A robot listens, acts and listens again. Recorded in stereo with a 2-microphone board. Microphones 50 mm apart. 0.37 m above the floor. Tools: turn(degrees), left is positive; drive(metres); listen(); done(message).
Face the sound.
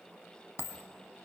turn(degrees=90)
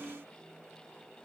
done("I heard a dropped coin from this way, but can't make it out now.")